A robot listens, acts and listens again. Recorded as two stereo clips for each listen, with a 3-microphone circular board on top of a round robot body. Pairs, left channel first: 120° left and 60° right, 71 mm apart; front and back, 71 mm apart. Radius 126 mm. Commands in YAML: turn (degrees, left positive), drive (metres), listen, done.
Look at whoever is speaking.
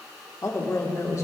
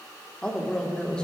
turn: 75
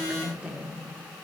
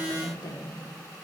turn: 15
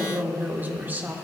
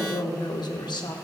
done: "Found it: a woman speaking, straight ahead."